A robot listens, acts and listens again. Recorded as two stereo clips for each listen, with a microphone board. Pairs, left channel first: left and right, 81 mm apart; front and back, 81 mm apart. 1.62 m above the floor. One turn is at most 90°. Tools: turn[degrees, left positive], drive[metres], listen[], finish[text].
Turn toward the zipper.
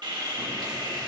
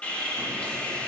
Action: listen[]
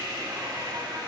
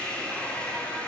Action: listen[]
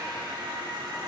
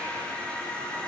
Action: finish[I can't make out a zipper, only sawing.]